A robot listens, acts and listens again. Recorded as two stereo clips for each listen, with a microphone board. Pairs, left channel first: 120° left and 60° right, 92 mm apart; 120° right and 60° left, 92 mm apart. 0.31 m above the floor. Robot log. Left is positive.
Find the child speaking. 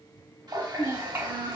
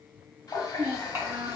end: Found it: a child speaking, straight ahead.